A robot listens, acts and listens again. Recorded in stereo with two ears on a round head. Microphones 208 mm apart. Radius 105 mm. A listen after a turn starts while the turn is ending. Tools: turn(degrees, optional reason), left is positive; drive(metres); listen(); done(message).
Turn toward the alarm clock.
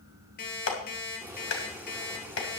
turn(degrees=45, reason="The alarm clock: about 45° left or 135° left.")
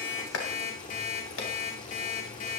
turn(degrees=95, reason="So it is at 95° left.")
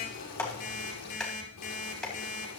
turn(degrees=35, reason="The alarm clock is now 35° left.")
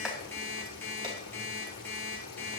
turn(degrees=10, reason="The alarm clock is now 10° left.")
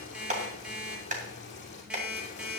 done("Found it: an alarm clock, straight ahead.")